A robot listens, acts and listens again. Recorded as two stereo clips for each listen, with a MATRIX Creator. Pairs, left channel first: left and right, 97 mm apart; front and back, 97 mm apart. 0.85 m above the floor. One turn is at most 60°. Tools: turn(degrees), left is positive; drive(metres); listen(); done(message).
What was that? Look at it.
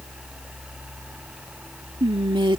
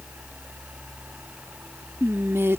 turn(degrees=-60)
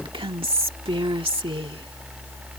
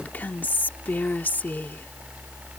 turn(degrees=-60)
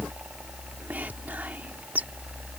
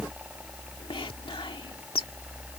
turn(degrees=-20)
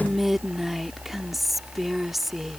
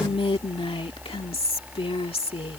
done("Facing the whispering.")